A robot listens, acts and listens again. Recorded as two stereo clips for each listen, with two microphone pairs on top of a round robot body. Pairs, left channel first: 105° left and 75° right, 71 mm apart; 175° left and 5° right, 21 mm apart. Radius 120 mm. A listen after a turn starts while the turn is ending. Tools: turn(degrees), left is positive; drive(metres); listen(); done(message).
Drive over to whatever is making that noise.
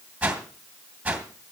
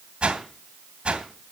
drive(metres=1.0)
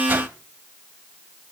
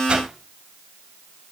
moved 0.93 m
turn(degrees=-15)
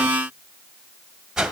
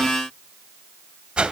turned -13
drive(metres=1.0)
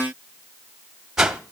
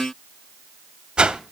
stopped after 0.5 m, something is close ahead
done("Arrived at the whoosh, straight ahead.")